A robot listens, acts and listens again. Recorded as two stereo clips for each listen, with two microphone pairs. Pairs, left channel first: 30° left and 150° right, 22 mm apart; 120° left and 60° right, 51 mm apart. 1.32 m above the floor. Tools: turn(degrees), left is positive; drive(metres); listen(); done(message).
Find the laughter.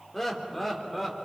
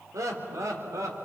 turn(degrees=-60)
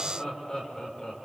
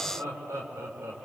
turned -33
turn(degrees=-35)
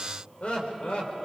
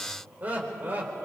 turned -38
done("Facing the laughter, over 4 m away.")